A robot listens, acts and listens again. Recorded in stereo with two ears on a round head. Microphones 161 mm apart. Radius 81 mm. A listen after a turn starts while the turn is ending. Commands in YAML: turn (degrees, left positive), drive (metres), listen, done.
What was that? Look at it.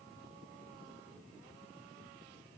listen: true
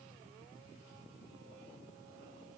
listen: true
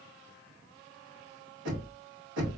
turn: -90
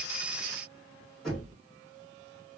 done: "Facing the knocking, 2 to 4 m away."